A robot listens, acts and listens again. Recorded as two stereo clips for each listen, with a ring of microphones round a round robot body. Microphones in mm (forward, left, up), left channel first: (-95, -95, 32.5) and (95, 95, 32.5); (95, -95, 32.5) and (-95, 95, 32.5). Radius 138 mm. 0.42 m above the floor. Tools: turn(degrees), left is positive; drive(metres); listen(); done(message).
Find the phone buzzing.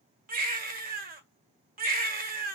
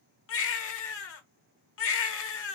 listen()
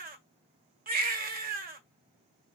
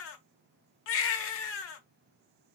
listen()
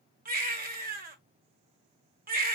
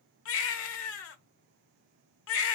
done("I can't make out a phone buzzing to turn to.")